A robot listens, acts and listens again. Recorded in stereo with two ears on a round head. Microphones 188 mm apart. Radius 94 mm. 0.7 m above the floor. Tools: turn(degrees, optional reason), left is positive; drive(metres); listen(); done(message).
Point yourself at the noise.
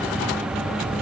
listen()
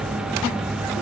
listen()
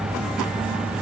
done("I can't make out anything to turn to.")